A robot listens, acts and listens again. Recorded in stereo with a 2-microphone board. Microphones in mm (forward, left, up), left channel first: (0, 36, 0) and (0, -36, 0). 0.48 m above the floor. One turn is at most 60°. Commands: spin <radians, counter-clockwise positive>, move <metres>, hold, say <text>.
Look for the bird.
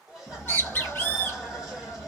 spin 0.52
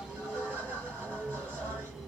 say Found it: a bird, straight ahead, 1 to 2 m away.